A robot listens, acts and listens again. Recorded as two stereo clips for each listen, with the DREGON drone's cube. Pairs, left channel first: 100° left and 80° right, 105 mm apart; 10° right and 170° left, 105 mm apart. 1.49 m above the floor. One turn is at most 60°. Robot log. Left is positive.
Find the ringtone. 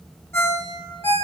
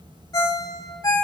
note: The ringtone: 35° left.
cmd yaw +35
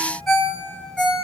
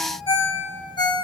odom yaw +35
note: The ringtone is now 15° left.
cmd yaw +15
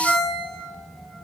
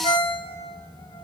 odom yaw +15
end: Found it: a ringtone, straight ahead, 2 to 4 m away.